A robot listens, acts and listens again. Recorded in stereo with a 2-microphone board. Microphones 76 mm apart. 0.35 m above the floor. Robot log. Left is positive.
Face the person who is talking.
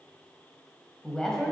cmd yaw +30
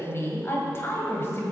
note: So it is at 140° left.
cmd yaw +140
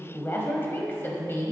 note: The woman speaking is now 40° left.
cmd yaw +40
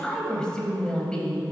note: The woman speaking is now 15° left.
cmd yaw +15
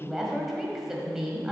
end: Facing the woman speaking.